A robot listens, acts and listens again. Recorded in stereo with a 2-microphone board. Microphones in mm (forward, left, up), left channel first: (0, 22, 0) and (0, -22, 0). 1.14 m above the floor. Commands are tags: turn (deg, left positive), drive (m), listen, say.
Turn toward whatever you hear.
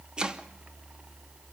<turn deg="-20"/>
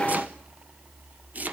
<turn deg="-140"/>
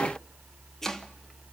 <turn deg="10"/>
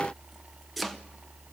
<say>Facing the chopping, 1 to 2 m away.</say>